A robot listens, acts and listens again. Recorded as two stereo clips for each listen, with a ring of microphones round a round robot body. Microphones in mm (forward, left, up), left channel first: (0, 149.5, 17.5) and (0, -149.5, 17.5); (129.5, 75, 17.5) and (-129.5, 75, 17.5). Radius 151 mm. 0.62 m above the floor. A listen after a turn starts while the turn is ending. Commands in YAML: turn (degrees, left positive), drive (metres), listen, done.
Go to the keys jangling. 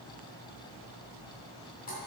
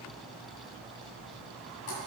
listen: true
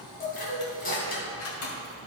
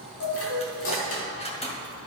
turn: 65
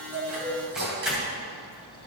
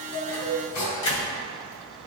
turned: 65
drive: 1.0
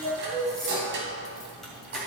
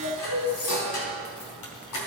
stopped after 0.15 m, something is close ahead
listen: true
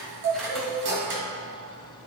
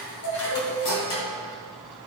listen: true
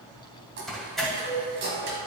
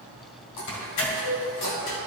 done: "Something is in my way. I am facing the keys jangling but have not reached it."